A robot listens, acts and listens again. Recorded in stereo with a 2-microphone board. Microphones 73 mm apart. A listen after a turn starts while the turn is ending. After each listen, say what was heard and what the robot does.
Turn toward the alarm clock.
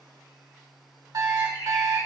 The alarm clock: about 55° right or 125° right. Turn 55° right.
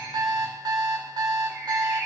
So it is at 70° right. Turn 70° right.
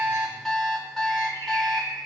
The alarm clock is now 10° left. Turn 10° left.
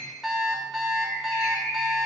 Found it: an alarm clock, straight ahead, 1 to 2 m away.